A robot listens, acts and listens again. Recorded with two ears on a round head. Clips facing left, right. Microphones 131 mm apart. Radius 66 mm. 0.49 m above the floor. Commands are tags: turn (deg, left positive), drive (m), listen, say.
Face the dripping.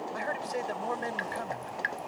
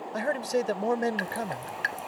<turn deg="-50"/>
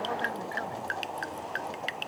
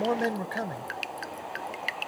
<turn deg="-10"/>
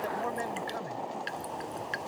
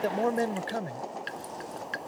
<say>Facing the dripping.</say>